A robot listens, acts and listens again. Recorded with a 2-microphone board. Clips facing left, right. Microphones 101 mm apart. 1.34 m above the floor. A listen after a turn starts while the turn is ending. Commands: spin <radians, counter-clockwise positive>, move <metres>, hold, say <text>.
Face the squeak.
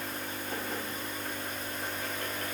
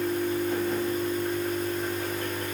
hold
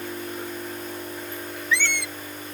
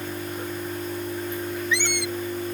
spin -0.35
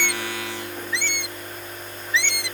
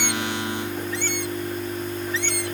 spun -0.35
spin -2.44
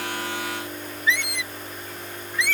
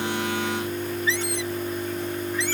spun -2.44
spin -0.61
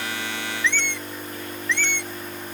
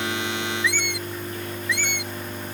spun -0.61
spin -0.17
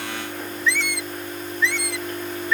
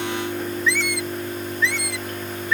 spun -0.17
say Found it: a squeak, straight ahead.